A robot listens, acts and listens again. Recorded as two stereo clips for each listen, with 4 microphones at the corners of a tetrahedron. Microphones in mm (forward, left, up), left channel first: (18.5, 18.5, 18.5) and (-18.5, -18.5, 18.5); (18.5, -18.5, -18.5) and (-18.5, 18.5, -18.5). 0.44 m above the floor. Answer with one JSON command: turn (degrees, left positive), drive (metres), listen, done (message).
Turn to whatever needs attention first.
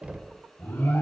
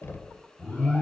{"done": "Facing the alarm, over 4 m away."}